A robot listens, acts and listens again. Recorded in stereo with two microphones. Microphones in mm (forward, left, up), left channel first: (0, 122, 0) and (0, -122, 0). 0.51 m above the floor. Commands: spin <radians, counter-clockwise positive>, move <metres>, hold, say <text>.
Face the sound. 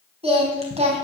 spin -0.44
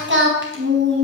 spin -2.27
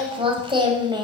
spin -0.26
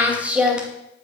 say Facing the singing, 2 to 4 m away.